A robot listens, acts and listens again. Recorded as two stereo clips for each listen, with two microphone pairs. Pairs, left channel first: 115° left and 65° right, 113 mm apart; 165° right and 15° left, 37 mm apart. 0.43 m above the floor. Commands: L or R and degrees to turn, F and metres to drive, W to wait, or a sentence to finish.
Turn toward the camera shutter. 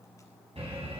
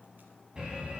W
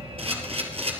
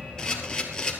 R95
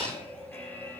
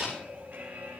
W
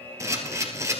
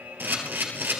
Found it: a camera shutter, straight ahead.